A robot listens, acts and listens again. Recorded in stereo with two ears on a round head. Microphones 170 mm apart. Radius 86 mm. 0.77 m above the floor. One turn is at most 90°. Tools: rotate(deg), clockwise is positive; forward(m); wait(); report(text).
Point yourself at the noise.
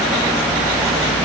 wait()
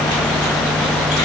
wait()
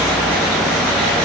report("I can't make out anything to turn to.")